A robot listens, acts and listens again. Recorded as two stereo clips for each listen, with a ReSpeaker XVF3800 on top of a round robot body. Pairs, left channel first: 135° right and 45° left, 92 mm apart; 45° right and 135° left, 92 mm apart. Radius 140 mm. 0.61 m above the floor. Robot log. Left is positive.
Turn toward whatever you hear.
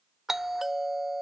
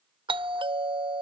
note: The doorbell: 130° left.
cmd yaw +130
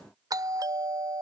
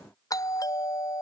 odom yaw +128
end: Found it: a doorbell, straight ahead.